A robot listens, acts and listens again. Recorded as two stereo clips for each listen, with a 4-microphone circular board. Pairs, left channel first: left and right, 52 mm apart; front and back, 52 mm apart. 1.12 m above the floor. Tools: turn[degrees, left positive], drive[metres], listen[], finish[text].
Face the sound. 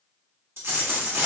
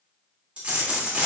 Thought: The dropped coin: 115° right.
Action: turn[-115]
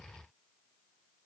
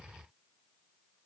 Action: finish[I heard a dropped coin from this way, but can't make it out now.]